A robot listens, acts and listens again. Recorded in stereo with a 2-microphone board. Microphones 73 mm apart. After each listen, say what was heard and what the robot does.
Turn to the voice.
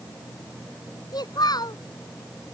The child speaking: about 65° left or 115° left. Turn 65° left.
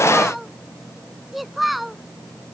Facing the child speaking.